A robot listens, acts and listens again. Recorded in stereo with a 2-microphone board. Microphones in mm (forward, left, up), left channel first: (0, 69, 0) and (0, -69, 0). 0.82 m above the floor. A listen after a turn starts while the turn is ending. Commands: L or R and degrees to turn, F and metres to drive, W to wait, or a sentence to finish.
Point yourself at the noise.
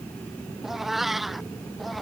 L30
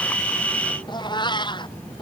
L145
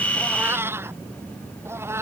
R20
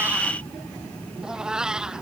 Found it: a cat meowing, straight ahead.